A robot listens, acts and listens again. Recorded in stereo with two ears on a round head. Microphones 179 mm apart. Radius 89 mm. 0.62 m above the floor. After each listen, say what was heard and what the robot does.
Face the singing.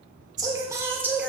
Turn 30° right.
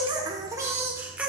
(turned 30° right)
Turn 30° right.
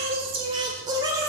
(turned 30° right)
The singing: about 20° right or 160° right. Turn 20° right.
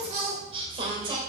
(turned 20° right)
So it is at 155° right. Turn 155° right.
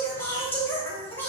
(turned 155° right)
The singing is now 10° left. Turn 10° left.
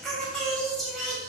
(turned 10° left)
Found it: singing, straight ahead.